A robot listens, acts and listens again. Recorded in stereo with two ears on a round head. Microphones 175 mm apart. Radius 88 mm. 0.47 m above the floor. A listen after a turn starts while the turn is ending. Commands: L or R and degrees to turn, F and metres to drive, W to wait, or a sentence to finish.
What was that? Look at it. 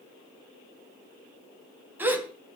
R30
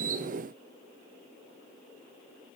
W
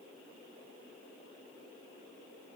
I heard a gasp, but can't make it out now. It was about 20° left or 140° right.